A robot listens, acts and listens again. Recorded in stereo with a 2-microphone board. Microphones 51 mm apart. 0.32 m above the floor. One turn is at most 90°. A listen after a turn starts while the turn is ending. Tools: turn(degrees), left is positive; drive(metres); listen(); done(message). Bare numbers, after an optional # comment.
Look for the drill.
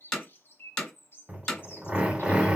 # The drill: about 20° right or 160° right.
turn(-20)
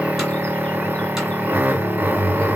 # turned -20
# So it is at 140° right.
turn(-90)
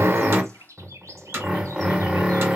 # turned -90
# The drill is now 20° right.
turn(-20)
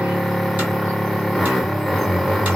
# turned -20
done("Facing the drill, under 1 m away.")